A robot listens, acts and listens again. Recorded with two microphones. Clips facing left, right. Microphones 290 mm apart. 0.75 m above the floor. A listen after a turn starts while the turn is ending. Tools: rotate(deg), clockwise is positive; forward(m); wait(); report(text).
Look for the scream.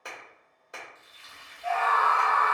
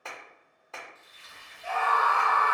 rotate(30)
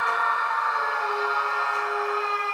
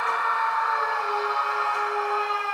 rotate(135)
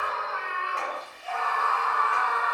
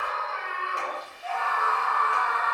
rotate(-20)
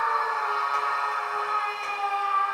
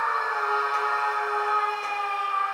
report("Found it: a scream, straight ahead.")